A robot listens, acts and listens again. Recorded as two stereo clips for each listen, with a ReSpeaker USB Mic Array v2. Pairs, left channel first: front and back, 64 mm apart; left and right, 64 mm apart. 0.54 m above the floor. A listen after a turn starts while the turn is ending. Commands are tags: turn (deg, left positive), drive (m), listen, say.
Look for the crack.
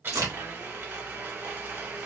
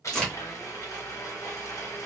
<turn deg="165"/>
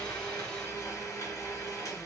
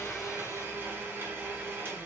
<say>Facing where the crack came from. I can't hear it now.</say>